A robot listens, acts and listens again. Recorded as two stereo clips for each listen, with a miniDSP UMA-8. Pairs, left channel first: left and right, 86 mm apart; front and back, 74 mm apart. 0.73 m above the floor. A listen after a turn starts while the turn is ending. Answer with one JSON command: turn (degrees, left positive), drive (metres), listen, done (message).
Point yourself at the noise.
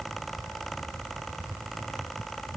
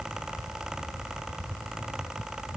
{"listen": true}
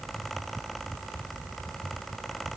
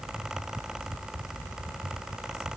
{"listen": true}
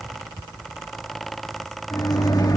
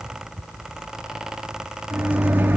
{"turn": 120}
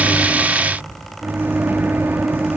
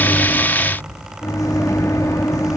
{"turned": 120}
{"turn": -30}
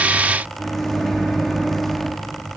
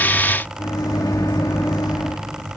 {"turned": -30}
{"done": "Facing the microwave."}